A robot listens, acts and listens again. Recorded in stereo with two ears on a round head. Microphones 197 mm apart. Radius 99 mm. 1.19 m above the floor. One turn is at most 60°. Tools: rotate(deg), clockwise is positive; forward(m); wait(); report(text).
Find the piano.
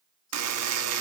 wait()
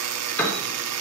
rotate(-30)
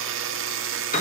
rotate(-60)
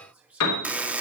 rotate(-60)
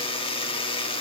rotate(-25)
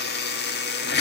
wait()
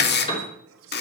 rotate(-25)
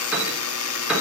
report("Facing the piano.")